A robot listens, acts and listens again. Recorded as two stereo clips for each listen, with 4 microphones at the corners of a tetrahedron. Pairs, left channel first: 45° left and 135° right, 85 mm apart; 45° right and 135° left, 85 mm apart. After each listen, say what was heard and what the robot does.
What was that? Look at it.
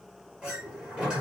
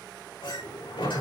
The sliding door: 55° right. Turn 55° right.
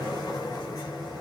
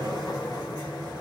Found it: a sliding door, straight ahead.